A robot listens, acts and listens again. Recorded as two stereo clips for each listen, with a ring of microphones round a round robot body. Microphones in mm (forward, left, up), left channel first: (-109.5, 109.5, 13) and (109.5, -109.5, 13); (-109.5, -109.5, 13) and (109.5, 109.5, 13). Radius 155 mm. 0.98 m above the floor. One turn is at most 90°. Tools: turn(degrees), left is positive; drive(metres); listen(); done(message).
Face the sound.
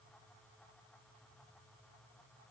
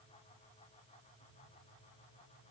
listen()
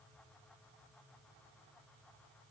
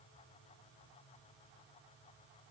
listen()
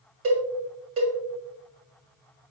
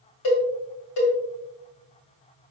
turn(degrees=-90)
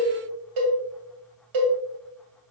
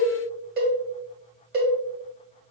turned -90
turn(degrees=-15)
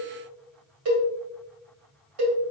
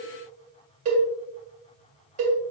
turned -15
done("Found it: a cowbell, straight ahead.")